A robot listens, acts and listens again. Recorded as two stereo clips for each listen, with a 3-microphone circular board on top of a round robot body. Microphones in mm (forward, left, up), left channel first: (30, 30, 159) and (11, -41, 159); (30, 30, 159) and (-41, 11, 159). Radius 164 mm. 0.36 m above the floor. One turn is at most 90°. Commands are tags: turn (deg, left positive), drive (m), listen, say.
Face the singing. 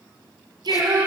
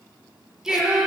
<turn deg="-80"/>
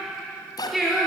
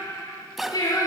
<turn deg="-15"/>
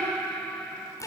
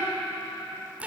<say>Facing the singing, over 4 m away.</say>